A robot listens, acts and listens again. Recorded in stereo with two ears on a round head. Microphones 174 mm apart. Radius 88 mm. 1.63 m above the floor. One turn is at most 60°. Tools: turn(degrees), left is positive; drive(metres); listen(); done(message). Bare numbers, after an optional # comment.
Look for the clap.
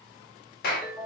# The clap: about 45° left or 135° left.
turn(45)
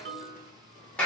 done("Found it: a clap, straight ahead, 1 to 2 m away.")